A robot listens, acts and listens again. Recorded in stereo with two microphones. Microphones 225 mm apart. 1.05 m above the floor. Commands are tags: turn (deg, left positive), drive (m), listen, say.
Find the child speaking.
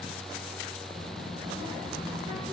<turn deg="-30"/>
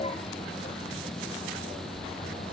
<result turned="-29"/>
<turn deg="55"/>
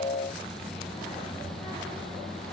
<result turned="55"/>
<turn deg="20"/>
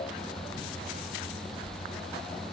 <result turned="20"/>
<say>Found it: a child speaking, straight ahead, 2 to 4 m away.</say>